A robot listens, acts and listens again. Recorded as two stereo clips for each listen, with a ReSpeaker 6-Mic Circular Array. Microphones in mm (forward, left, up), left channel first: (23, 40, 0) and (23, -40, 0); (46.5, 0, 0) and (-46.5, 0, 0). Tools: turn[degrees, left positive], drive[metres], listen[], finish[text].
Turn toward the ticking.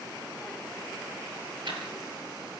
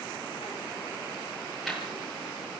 Thought: The ticking: 90° right.
Action: turn[-90]
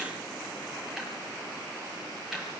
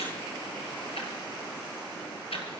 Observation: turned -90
Action: finish[Found it: ticking, straight ahead, over 4 m away.]